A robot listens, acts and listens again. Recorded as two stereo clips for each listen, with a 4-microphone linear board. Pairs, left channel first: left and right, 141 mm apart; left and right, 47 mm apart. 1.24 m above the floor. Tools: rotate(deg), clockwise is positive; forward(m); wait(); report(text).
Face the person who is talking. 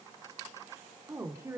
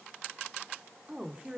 rotate(20)
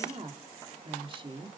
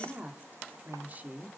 rotate(35)
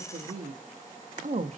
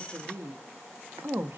rotate(125)
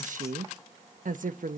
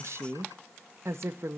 rotate(65)
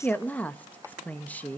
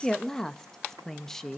rotate(-10)
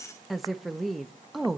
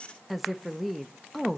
report("Found it: a woman speaking, straight ahead.")